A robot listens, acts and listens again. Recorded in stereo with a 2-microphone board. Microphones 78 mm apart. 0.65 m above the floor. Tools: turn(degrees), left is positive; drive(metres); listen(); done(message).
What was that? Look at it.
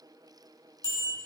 turn(degrees=-55)
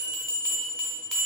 done("Facing the bell, 1 to 2 m away.")